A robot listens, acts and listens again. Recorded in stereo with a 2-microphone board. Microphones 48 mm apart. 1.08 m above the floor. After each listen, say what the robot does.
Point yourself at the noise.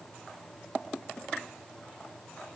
Keep listening.
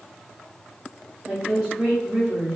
Turn 20° right.
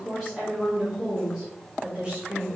Turn 20° right.
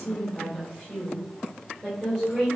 Turn 30° right.
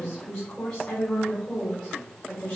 Turn 25° left.
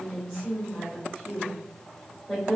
Found it: a woman speaking, straight ahead.